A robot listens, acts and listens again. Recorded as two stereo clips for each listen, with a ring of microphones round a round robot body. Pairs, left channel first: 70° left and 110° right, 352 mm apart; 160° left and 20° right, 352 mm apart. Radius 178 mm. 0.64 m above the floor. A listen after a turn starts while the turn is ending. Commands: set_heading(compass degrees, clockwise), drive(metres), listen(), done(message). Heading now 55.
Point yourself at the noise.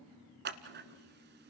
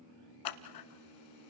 set_heading(230)
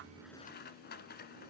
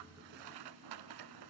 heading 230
done("Found it: scissors, straight ahead.")